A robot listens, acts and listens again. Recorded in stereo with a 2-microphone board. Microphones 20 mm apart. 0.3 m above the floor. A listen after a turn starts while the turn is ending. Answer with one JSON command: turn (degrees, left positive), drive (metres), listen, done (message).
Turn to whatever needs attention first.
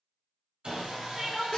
{"turn": -20}
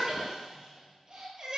{"turn": -140}
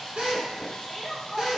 {"turn": 10}
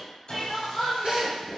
{"done": "Found it: crying, straight ahead, 1 to 2 m away."}